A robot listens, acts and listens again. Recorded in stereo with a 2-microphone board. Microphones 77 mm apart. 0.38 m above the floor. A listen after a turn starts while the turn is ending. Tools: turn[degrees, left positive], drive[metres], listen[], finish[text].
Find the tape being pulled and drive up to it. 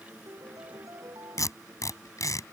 Thought: The tape being pulled: about 50° left or 130° left.
Action: turn[50]
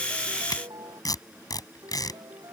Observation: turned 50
Thought: So it is at 75° left.
Action: turn[75]
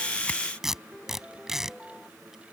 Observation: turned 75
Action: drive[1.0]
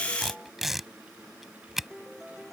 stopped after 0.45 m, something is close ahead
Action: finish[Blocked. The tape being pulled is further on, straight ahead.]